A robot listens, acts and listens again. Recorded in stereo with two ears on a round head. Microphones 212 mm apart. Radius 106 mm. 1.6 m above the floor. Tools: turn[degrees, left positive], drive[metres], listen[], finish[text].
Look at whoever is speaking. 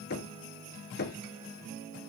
Action: listen[]
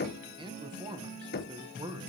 Thought: The man speaking: about 20° right or 160° right.
Action: turn[-20]
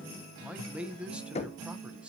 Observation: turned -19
Action: finish[Facing the man speaking.]